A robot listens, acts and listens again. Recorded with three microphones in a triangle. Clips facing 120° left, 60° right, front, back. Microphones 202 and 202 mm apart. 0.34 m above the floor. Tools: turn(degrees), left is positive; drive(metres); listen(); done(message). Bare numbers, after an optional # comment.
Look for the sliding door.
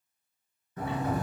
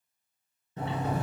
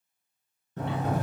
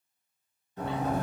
done("Facing the sliding door, under 1 m away.")